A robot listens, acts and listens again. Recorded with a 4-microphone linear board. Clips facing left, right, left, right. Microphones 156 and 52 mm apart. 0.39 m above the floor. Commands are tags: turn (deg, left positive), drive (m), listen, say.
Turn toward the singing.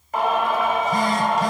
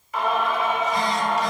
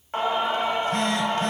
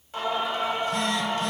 <turn deg="50"/>
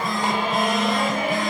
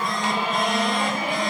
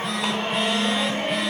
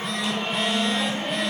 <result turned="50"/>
<turn deg="60"/>
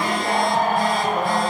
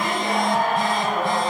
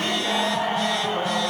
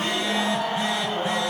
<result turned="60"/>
<turn deg="35"/>
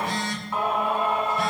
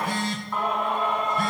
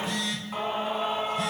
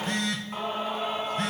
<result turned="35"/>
<say>Found it: singing, straight ahead.</say>